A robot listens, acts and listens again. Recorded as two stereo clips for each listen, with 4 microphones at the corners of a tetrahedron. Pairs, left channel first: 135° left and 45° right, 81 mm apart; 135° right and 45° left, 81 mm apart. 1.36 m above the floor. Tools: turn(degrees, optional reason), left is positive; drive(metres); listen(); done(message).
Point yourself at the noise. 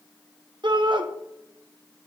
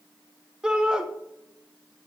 turn(degrees=-35, reason="The shout: 35° right.")
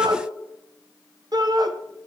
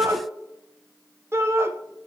turn(degrees=-15, reason="The shout is now 15° right.")
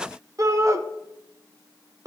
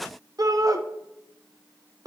done("Facing the shout.")